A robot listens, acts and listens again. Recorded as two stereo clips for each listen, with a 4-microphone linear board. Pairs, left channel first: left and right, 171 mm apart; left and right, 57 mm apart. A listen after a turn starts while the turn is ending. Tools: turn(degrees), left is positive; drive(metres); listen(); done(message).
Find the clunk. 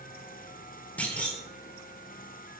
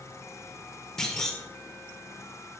turn(degrees=30)
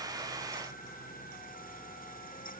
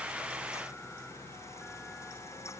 listen()
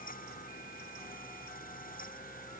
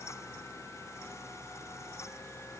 done("I heard a clunk, but can't make it out now. It was about 20° right or 140° left.")